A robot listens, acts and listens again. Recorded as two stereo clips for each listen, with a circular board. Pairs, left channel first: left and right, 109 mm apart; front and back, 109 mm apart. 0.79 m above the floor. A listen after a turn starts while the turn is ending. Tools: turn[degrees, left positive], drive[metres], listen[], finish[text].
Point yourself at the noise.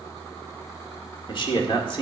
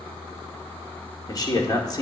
Thought: The man speaking: 50° left.
Action: turn[50]
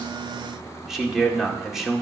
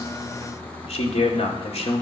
Action: finish[Found it: a man speaking, straight ahead, 2 to 4 m away.]